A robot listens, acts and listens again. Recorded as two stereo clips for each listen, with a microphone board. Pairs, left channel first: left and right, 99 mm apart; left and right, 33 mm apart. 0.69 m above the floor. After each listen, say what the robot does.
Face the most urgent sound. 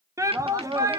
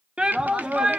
Turn 30° right.
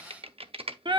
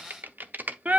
Turn 110° right.
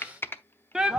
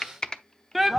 Turn 10° right.
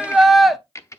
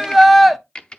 Found it: a shout, straight ahead.